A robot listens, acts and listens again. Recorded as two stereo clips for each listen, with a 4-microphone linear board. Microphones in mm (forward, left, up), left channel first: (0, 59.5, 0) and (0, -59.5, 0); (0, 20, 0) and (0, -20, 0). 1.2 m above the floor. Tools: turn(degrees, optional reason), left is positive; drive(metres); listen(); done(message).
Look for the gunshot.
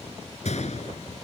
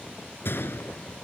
turn(degrees=65, reason="The gunshot: about 65° left or 115° left.")
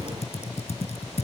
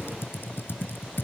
listen()
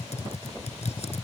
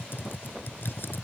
done("I heard a gunshot, but can't make it out now. It was about straight ahead or 50° left.")